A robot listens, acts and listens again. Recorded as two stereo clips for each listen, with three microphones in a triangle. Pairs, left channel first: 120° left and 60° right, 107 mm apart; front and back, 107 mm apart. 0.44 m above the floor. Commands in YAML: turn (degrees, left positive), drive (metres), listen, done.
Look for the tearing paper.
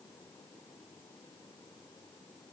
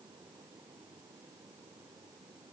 listen: true
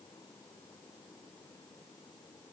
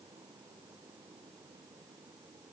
listen: true
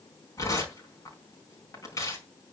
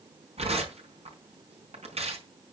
turn: 175
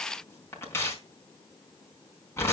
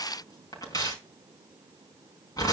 turn: 55
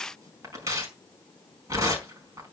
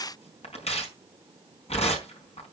done: "Facing the tearing paper, over 4 m away."